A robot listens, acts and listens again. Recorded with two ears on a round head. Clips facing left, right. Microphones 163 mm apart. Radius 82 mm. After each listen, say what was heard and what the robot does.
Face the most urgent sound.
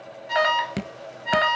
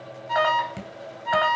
The alarm: about 30° left or 150° left. Turn 30° left.
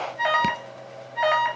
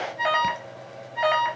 Facing the alarm.